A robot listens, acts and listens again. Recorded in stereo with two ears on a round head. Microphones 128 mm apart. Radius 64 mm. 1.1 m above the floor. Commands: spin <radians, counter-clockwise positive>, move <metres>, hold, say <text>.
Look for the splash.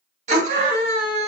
hold
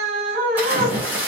spin -0.52
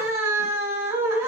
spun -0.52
hold
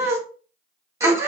say I heard a splash, but can't make it out now. It was about 15° left or 135° right.